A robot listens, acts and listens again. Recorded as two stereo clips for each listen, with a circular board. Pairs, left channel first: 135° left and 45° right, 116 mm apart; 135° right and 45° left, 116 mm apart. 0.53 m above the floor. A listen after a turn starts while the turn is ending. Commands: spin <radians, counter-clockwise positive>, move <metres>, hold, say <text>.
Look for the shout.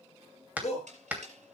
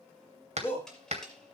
spin 2.62
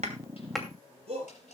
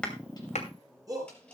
spin -0.26
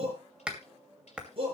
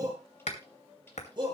say Facing the shout, over 4 m away.